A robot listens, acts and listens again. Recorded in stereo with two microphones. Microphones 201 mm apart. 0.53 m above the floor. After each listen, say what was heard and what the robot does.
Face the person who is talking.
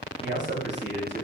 The man speaking: about 65° right or 115° right. Turn 65° right.
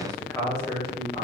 So it is at 20° left. Turn 20° left.
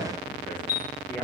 Keep listening.
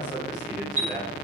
The man speaking is now 15° left. Turn 15° left.
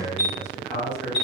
The man speaking is now 10° left. Turn 10° left.
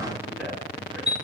Keep listening.
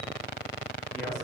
Keep listening.
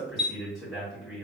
Found it: a man speaking, straight ahead.